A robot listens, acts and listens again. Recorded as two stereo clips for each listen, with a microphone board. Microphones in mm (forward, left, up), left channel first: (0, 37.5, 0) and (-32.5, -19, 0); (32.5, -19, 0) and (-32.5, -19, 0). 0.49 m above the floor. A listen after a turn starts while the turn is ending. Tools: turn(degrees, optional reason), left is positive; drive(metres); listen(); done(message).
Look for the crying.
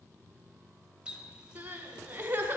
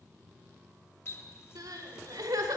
turn(degrees=180, reason="The crying: straight behind.")
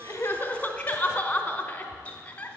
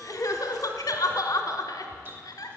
turn(degrees=-10, reason="The crying is now 10° right.")
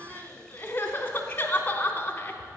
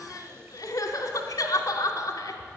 done("Found it: crying, straight ahead.")